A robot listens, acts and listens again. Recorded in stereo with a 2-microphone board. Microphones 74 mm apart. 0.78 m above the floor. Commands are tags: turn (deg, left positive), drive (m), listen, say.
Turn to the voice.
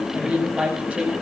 <turn deg="-15"/>
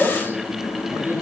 <turn deg="-150"/>
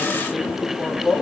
<say>Found it: a woman speaking, straight ahead, over 4 m away.</say>